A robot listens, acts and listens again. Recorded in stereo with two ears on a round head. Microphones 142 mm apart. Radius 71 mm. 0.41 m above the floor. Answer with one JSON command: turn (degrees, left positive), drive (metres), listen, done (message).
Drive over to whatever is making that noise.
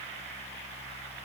{"listen": true}
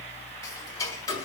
{"turn": 25}
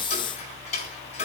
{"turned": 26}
{"turn": 130}
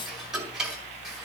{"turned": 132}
{"drive": 1.0}
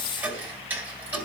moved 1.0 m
{"turn": -15}
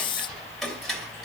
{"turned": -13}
{"drive": 1.0}
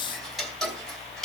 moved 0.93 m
{"drive": 1.0}
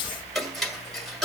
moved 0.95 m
{"drive": 1.0}
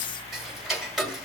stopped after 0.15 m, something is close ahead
{"done": "Arrived at the ticking, straight ahead."}